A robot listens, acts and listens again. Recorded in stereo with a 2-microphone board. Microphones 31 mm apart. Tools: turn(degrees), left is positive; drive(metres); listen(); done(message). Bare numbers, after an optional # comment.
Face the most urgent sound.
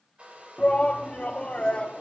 # The shout: about 40° left or 140° left.
turn(40)
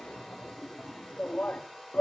# So it is at 90° left.
turn(90)
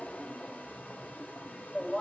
# The shout is now 15° left.
turn(15)
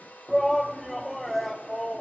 done("Found it: a shout, straight ahead, under 1 m away.")